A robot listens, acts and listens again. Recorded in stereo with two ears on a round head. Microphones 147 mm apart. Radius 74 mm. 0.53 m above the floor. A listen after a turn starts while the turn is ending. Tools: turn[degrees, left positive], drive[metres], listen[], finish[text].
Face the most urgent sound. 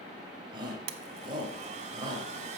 Thought: The shout: about 30° right or 150° right.
Action: turn[-30]
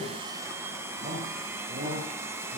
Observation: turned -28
Thought: So it is at 120° right.
Action: turn[-120]
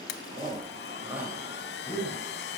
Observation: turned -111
Thought: The shout is now 10° right.
Action: turn[-10]
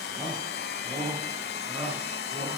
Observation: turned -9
Action: finish[Found it: a shout, straight ahead, 2 to 4 m away.]